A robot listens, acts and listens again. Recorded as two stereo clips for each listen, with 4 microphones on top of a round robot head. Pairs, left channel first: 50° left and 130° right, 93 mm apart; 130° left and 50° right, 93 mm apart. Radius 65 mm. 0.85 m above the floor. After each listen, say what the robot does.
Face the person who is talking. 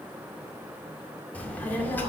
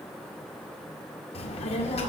Turn 120° left.
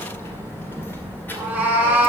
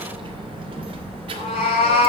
Turn 20° right.
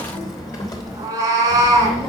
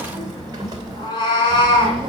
Facing the child speaking, 2 to 4 m away.